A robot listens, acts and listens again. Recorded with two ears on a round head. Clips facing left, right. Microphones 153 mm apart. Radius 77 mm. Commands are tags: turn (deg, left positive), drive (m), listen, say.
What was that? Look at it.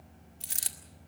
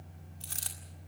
<turn deg="20"/>
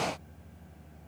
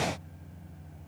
<listen/>
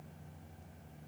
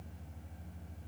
<say>I heard a dropped coin, but can't make it out now. It was about straight ahead or 140° left.</say>